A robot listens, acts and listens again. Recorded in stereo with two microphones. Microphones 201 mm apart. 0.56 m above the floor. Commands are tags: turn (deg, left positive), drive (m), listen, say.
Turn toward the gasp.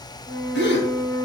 <turn deg="70"/>
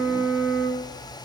<listen/>
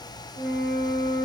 <say>I heard a gasp, but can't make it out now. It was about straight ahead or 40° left.</say>